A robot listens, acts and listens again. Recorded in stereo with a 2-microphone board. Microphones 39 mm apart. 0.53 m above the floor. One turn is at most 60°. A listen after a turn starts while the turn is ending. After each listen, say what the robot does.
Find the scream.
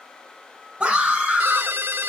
Turn 35° right.
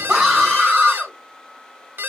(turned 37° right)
Found it: a scream, straight ahead.